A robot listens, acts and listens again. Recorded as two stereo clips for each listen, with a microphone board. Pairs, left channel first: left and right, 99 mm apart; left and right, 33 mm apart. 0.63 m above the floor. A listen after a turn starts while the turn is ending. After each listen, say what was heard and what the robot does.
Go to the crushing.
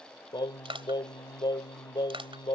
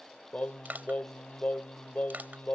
The crushing: about 60° right or 120° right. Turn 60° right.
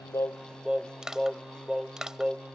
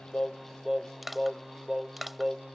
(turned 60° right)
Drive 1.0 m forward.
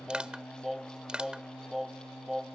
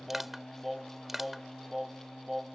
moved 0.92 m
The crushing is now 10° right. Turn 10° right.
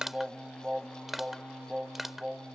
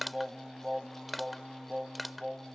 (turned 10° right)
Drive 1.0 m forward.
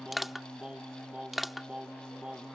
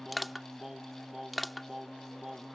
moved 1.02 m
Drive 1.0 m forward.
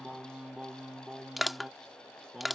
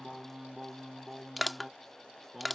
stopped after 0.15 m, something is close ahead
Arrived at the crushing, straight ahead.